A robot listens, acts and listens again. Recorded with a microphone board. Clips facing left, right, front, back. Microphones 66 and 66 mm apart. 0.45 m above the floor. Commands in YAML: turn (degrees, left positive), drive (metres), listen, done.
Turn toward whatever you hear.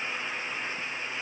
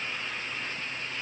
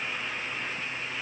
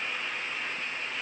listen: true
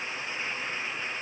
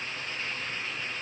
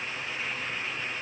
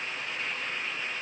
listen: true
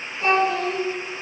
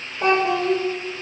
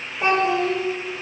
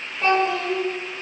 turn: -75
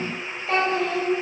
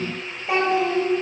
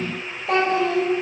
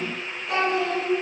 turn: -20
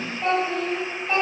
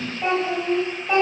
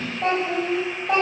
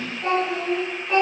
turn: -20
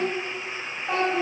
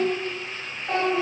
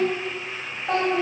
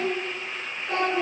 done: "Found it: a child speaking, straight ahead, 2 to 4 m away."